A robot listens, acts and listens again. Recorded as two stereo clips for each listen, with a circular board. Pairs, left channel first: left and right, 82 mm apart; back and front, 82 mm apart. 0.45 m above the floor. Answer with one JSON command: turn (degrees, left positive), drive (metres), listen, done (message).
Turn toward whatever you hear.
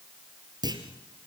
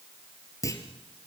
{"turn": -130}
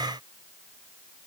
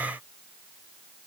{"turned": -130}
{"done": "I heard a clunk from this way, but can't make it out now."}